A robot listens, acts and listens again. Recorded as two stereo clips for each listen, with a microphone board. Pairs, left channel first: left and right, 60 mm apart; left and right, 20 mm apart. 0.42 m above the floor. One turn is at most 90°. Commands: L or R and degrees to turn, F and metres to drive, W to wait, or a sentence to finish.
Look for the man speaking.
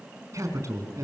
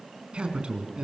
R60
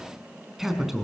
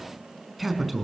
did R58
Facing the man speaking.